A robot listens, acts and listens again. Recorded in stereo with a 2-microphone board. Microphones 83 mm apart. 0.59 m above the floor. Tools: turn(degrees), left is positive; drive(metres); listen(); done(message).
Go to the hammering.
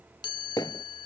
turn(degrees=50)
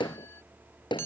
turn(degrees=80)
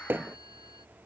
turn(degrees=-25)
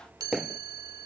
drive(metres=1.0)
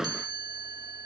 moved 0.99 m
turn(degrees=-10)
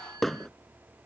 drive(metres=1.0)
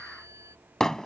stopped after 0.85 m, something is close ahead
done("Arrived at the hammering, straight ahead.")